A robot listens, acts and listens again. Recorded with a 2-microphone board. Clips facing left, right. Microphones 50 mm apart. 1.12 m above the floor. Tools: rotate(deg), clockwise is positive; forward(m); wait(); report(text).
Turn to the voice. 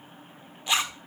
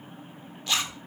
wait()
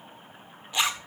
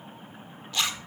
wait()
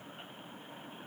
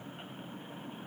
report("I can't make out anyone speaking to turn to.")